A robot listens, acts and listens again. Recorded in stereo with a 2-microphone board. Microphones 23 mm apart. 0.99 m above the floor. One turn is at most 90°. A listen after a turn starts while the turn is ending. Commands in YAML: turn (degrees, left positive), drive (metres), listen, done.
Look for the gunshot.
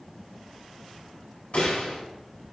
turn: 60
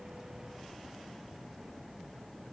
listen: true
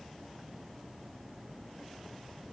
done: "I heard a gunshot, but can't make it out now. It was about straight ahead or 60° left."